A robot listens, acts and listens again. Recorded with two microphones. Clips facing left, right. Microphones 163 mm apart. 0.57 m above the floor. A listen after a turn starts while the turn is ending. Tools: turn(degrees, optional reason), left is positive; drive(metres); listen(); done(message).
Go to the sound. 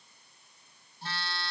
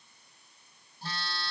turn(degrees=-40, reason="The phone buzzing: about 40° right or 140° right.")
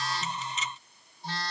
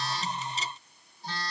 drive(metres=1.0)
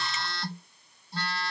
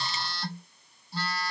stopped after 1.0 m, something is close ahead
done("Arrived at the phone buzzing, straight ahead.")